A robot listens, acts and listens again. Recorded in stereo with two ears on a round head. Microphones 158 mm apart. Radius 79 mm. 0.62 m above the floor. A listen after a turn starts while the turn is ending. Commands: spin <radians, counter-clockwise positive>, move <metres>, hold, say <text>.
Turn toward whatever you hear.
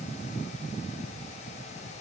hold
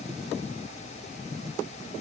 hold
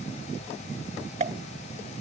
spin -0.70
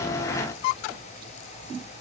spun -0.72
hold
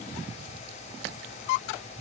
say I heard a pop, but can't make it out now. It was about 5° left or 100° right.